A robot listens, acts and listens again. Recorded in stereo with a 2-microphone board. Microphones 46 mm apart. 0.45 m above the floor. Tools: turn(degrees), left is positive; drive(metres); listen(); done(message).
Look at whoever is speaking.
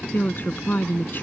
turn(degrees=45)
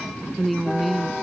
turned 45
done("Found it: a woman speaking, straight ahead.")